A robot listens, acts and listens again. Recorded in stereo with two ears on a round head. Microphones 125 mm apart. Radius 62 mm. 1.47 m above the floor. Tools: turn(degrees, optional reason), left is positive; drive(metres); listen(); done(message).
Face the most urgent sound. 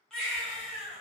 turn(degrees=30)
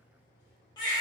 turn(degrees=140, reason="So it is at 140° left.")
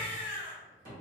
turn(degrees=15, reason="The baby crying is now 15° left.")
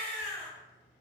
done("Found it: a baby crying, straight ahead, under 1 m away.")